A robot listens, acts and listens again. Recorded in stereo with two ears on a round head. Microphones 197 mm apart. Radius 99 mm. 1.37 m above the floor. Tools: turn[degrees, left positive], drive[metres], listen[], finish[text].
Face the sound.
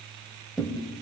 Action: turn[30]
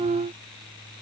Action: listen[]
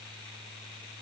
Action: finish[I heard a thud, but can't make it out now. It was about 30° right or 150° left.]